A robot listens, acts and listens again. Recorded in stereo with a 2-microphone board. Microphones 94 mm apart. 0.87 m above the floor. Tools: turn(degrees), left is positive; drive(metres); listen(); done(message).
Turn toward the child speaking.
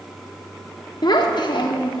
turn(degrees=60)
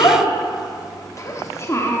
turn(degrees=30)
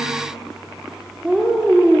turn(degrees=-15)
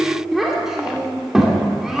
done("Found it: a child speaking, straight ahead.")